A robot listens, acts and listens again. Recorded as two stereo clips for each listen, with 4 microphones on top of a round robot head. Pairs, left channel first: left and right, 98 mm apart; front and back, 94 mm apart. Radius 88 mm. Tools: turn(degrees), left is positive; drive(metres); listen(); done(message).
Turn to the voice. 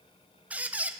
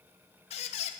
listen()
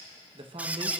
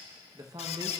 turn(degrees=-125)
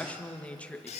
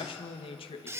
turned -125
turn(degrees=15)
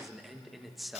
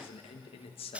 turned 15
done("Facing the man speaking, 1 to 2 m away.")